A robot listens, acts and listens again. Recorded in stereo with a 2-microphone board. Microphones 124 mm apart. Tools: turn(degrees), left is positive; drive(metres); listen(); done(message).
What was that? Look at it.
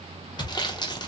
turn(degrees=35)
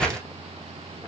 turn(degrees=10)
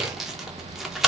done("Facing the sawing.")